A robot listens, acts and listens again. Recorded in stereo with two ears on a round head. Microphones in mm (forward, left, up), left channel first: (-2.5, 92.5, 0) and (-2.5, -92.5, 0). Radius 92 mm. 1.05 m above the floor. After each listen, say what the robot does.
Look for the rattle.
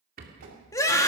Turn 45° right.
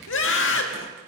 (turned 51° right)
Keep listening.
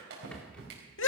Found it: a rattle, straight ahead, 2 to 4 m away.